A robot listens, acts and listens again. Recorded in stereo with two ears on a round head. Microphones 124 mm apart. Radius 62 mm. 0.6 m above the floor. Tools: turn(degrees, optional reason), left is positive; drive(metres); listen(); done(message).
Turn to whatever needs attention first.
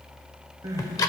turn(degrees=-25, reason="The crying: about 25° right or 155° right.")
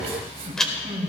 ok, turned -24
turn(degrees=-130, reason="So it is at 130° right.")
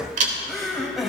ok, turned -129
done("Facing the crying.")